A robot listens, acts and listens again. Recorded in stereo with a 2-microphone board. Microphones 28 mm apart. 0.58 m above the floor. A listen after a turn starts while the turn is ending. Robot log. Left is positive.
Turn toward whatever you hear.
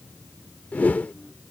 note: The whoosh: about 70° left or 110° left.
cmd yaw +70
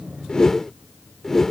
note: So it is at 20° left.
cmd yaw +20
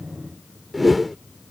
end: Facing the whoosh.